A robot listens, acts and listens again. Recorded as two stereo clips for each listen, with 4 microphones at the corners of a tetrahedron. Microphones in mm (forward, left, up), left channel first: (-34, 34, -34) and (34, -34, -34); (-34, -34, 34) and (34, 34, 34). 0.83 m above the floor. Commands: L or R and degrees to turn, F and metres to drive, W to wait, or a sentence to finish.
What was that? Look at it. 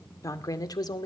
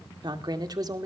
L95
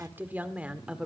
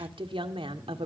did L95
L35
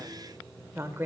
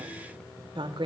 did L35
L20
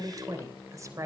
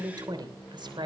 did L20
L10
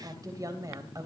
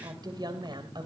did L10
L10
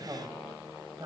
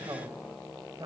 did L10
Facing the woman speaking, 2 to 4 m away.